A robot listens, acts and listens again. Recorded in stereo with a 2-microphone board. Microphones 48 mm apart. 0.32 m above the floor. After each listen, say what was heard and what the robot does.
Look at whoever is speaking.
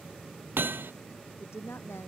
The woman speaking: about 75° left or 105° left. Turn 75° left.
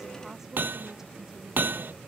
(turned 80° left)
So it is at 10° right. Turn 10° right.
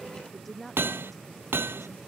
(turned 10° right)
Found it: a woman speaking, straight ahead.